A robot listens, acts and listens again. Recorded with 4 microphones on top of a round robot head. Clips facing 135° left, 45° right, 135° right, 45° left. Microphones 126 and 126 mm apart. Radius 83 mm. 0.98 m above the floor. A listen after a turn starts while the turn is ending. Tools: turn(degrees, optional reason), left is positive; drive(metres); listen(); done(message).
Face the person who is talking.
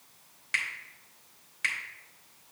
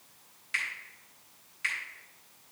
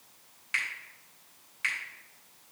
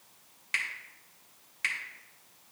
listen()
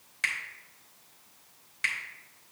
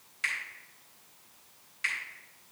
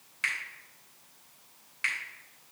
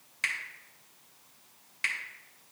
listen()
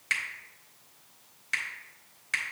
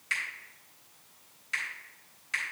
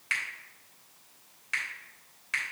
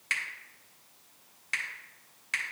done("I can't make out anyone speaking to turn to.")